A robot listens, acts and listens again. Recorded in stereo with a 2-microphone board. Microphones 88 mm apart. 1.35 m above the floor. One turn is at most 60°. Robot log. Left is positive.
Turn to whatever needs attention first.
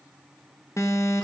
note: The alarm: about 35° left or 145° left.
cmd yaw +35
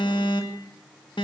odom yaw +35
note: So it is at 110° left.
cmd yaw +60
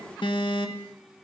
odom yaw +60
note: The alarm is now 70° left.
cmd yaw +60
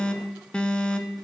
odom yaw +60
note: The alarm is now 10° left.
cmd yaw +10
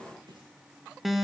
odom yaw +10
end: Facing the alarm, 1 to 2 m away.